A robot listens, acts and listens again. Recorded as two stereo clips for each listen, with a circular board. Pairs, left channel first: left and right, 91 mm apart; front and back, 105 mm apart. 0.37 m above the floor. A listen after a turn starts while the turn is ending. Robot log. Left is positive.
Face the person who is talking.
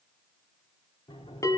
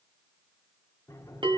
cmd idle
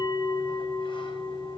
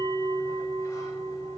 cmd idle
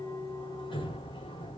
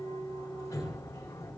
end: I can't make out anyone speaking, only a bell and a sliding door.